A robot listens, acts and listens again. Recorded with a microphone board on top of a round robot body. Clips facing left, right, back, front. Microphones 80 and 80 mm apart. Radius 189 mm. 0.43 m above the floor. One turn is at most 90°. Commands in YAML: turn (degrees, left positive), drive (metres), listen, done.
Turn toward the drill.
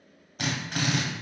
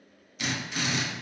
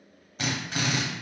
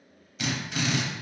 turn: 90
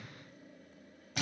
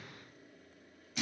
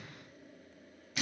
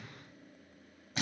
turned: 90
turn: 60
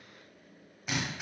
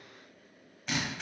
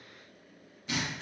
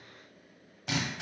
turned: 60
done: "Facing the drill, under 1 m away."